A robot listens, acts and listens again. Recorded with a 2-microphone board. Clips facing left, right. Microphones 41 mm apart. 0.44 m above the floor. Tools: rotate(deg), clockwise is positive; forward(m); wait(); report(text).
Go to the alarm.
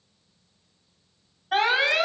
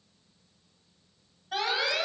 rotate(-50)
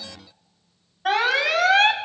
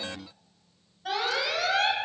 rotate(-75)
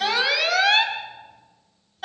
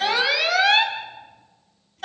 forward(1.0)
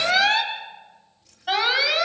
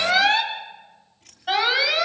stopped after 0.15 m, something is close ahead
report("Blocked. The alarm is further on, straight ahead.")